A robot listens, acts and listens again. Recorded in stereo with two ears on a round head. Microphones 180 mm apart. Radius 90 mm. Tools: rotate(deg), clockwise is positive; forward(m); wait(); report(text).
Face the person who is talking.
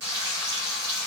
wait()
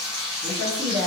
rotate(30)
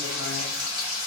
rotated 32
wait()
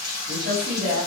rotate(115)
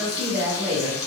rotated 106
rotate(10)
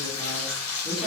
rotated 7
report("Facing the woman speaking, 1 to 2 m away.")